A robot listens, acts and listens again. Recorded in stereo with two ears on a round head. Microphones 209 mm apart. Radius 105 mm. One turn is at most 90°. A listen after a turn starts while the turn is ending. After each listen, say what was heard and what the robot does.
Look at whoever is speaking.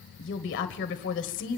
The woman speaking: about 55° left or 125° left. Turn 55° left.
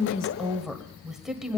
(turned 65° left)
Found it: a woman speaking, straight ahead, 1 to 2 m away.